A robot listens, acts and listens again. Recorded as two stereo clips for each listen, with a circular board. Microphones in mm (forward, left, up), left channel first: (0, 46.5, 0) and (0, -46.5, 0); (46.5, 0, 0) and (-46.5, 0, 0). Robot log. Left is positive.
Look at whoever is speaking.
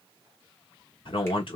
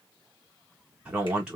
note: The man speaking: 100° left.
cmd yaw +100
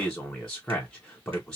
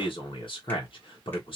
end: Found it: a man speaking, straight ahead.